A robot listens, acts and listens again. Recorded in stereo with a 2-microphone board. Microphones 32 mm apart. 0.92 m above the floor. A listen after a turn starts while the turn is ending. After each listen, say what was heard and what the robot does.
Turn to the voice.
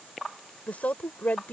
The woman speaking: about 65° left or 115° left. Turn 65° left.
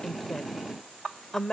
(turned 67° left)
So it is at 20° left. Turn 20° left.
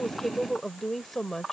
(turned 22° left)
The woman speaking is now 10° left. Turn 10° left.
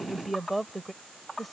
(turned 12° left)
Facing the woman speaking.